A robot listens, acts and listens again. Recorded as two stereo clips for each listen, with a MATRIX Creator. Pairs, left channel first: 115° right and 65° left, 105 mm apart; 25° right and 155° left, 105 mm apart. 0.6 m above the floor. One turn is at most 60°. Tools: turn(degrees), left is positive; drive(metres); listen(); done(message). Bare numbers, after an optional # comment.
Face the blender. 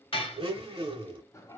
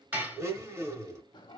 # The blender: 95° left.
turn(60)
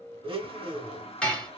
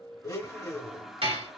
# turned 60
# The blender is now 35° left.
turn(35)
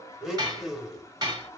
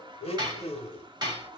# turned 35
# The blender is now 20° right.
turn(-20)
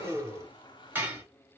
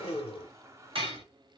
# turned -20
done("Found it: a blender, straight ahead, under 1 m away.")